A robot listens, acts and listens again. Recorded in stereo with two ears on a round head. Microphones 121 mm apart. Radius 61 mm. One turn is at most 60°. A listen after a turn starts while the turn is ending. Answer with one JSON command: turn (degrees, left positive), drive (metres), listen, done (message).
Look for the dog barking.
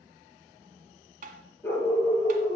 {"turn": 30}
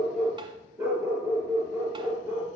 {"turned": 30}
{"turn": -15}
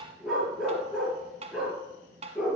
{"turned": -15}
{"done": "Facing the dog barking."}